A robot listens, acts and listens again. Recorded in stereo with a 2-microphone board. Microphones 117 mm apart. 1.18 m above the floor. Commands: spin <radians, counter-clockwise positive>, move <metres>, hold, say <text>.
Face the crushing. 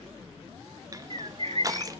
spin -0.52
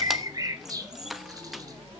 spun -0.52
say Found it: crushing, straight ahead.